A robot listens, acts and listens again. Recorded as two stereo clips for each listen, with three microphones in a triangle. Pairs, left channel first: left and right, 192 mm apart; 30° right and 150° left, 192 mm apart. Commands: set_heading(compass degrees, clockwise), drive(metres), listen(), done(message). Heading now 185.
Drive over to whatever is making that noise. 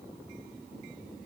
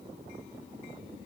listen()
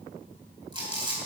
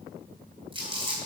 set_heading(335)
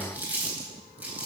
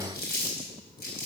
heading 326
set_heading(336)
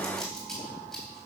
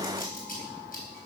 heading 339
drive(1.0)
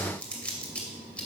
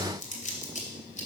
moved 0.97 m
set_heading(329)
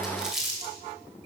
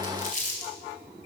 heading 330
drive(1.0)
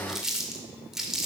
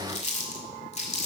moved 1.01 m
drive(1.0)
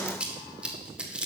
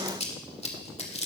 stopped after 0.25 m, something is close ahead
set_heading(340)
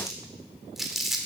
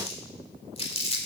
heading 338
done("I am next to the crumpling.")